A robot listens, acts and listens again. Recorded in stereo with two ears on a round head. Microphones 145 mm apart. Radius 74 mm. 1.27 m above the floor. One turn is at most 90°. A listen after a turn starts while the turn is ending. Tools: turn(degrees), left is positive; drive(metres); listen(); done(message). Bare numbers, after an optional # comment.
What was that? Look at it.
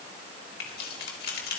# The keys jangling: about 60° left or 120° left.
turn(60)
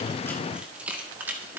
# So it is at 15° right.
turn(-15)
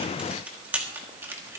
# The keys jangling is now 15° right.
turn(-15)
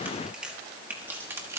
# The keys jangling is now 15° right.
turn(-15)
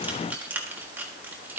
# The keys jangling is now 10° right.
turn(-10)
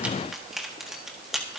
done("Facing the keys jangling.")